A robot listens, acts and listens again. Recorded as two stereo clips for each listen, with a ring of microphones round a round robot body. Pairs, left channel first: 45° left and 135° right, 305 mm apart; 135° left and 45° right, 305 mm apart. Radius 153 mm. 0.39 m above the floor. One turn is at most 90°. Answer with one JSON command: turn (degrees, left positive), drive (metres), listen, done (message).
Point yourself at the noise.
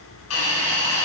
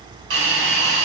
{"done": "Facing the hiss, 2 to 4 m away."}